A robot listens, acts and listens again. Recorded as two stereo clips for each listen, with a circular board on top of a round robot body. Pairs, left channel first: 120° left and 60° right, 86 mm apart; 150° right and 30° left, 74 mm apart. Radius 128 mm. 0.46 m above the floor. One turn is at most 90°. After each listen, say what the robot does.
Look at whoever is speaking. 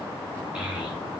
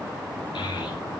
Turn 90° right.
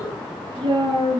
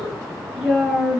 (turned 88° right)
Turn 50° right.
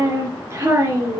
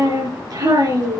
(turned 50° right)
Facing the child speaking, over 4 m away.